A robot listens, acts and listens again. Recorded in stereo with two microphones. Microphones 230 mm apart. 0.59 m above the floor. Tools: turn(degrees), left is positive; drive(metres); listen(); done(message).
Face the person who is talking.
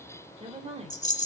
turn(degrees=-30)
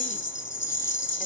listen()
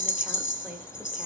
listen()
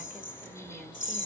done("I heard a woman speaking, but can't make it out now. It was about straight ahead or 120° right.")